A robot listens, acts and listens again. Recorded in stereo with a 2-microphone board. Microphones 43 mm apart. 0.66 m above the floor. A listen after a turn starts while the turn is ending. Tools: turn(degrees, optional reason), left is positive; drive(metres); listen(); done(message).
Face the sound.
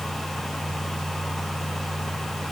listen()
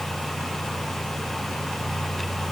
listen()
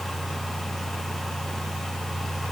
done("I can't make out anything.")